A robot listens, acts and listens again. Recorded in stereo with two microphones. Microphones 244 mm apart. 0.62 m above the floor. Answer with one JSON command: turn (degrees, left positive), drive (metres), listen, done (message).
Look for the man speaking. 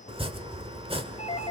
{"listen": true}
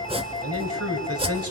{"turn": -75}
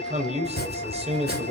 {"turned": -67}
{"turn": -25}
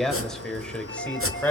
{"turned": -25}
{"done": "Found it: a man speaking, straight ahead."}